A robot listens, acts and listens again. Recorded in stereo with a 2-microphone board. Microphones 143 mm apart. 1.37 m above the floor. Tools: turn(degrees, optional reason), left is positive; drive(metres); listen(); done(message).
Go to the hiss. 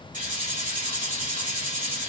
turn(degrees=-65, reason="The hiss: about 65° right or 115° right.")
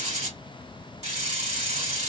turn(degrees=-50, reason="So it is at 50° right.")
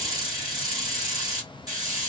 turn(degrees=-25, reason="The hiss is now 25° right.")
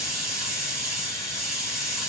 drive(metres=1.0)
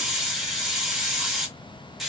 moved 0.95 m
drive(metres=1.0)
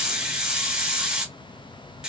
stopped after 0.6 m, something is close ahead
done("Arrived at the hiss, straight ahead.")